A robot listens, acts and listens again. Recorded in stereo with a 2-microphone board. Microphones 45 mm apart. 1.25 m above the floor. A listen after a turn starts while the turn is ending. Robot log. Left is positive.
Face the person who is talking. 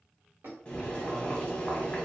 cmd idle
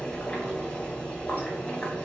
cmd idle
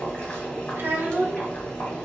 note: The child speaking: about 55° right or 125° right.
cmd yaw -55
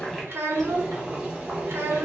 note: So it is at 70° right.
cmd yaw -70
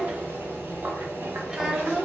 note: The child speaking is now 15° right.
cmd yaw -15
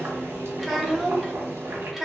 end: Found it: a child speaking, straight ahead, under 1 m away.